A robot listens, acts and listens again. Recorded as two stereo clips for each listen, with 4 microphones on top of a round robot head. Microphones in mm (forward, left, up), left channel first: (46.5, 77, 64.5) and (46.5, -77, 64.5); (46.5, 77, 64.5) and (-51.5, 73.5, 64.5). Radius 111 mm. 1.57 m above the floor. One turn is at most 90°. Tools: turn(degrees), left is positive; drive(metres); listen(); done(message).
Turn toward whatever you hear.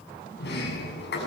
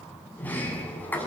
turn(degrees=75)
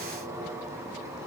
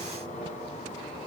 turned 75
turn(degrees=-20)
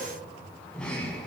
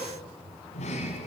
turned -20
done("Found it: a sliding door, straight ahead.")